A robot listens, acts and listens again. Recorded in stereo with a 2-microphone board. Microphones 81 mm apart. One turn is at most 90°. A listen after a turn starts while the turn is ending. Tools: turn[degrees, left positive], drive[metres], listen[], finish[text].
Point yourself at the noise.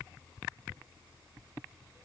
Action: listen[]
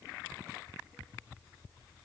Action: listen[]
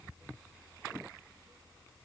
Action: finish[I can't make out anything to turn to.]